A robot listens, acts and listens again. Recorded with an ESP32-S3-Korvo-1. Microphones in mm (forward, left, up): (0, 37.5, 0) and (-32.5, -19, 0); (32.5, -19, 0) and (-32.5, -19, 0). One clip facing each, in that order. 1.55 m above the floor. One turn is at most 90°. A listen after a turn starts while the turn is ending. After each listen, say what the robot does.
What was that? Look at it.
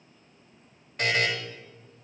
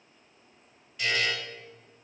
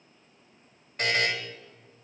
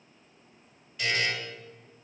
Turn 30° left.
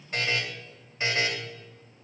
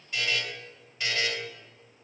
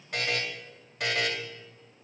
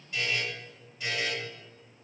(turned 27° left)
Found it: a buzzer, straight ahead.